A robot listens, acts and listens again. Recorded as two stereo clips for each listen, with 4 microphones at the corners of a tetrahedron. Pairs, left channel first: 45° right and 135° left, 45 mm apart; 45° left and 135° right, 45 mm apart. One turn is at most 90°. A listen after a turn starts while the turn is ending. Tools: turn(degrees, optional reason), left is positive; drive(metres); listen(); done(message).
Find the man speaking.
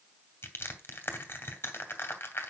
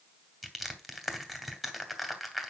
listen()
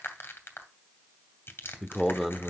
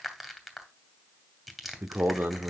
turn(degrees=-90, reason="The man speaking: 135° right.")
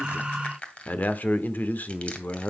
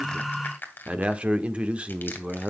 turn(degrees=-80, reason="The man speaking is now 80° right.")
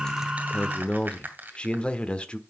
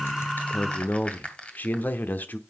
turn(degrees=15, reason="The man speaking is now 15° left.")
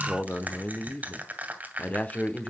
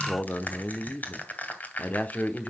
done("Found it: a man speaking, straight ahead, 1 to 2 m away.")